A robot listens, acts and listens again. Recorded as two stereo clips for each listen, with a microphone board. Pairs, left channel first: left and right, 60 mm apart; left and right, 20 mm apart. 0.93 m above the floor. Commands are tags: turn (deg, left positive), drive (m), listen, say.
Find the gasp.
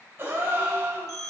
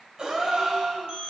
<turn deg="-40"/>
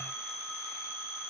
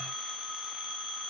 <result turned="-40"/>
<listen/>
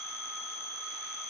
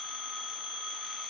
<say>I heard a gasp, but can't make it out now. It was about straight ahead or 100° right.</say>